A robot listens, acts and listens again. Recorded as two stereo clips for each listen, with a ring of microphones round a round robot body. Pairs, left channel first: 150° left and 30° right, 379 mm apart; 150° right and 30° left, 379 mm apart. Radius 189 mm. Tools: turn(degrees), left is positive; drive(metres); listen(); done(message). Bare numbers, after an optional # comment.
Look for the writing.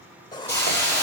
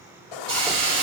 # The writing: 130° right.
turn(-130)
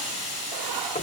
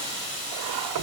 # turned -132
listen()
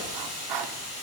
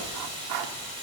done("Facing the writing, 1 to 2 m away.")